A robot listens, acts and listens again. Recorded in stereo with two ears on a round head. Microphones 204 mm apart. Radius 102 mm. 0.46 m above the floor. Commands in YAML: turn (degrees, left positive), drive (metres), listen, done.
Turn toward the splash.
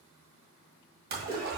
turn: -45
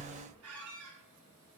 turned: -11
turn: -35
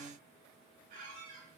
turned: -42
done: "Facing where the splash came from. I can't hear it now."